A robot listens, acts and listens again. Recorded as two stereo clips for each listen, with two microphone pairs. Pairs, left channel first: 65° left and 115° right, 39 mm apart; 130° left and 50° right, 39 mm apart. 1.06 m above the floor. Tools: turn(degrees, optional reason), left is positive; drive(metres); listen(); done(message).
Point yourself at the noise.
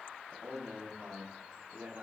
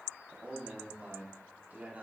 turn(degrees=-95, reason="The man speaking: 95° right.")
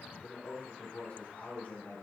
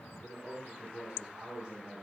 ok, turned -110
turn(degrees=15, reason="The man speaking is now 15° left.")
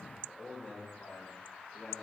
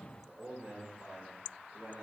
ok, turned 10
done("Facing the man speaking, 2 to 4 m away.")